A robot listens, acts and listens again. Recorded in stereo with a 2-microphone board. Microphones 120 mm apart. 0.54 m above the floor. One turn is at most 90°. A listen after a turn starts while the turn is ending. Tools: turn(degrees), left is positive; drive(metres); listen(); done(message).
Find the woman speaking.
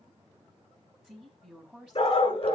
turn(degrees=-30)
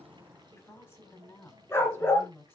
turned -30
turn(degrees=15)
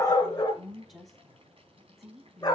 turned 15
done("Facing the woman speaking, over 4 m away.")